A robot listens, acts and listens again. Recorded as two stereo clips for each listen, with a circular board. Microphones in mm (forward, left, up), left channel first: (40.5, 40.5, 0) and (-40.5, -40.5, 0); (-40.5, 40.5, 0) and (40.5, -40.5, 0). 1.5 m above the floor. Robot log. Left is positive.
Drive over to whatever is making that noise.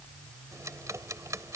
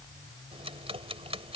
note: The ticking: 70° right.
cmd yaw -70
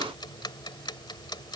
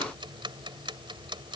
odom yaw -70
cmd fwd 1.0
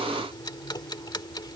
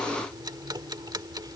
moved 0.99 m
cmd fwd 1.0
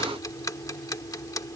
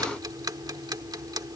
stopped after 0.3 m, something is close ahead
end: Arrived at the ticking, straight ahead.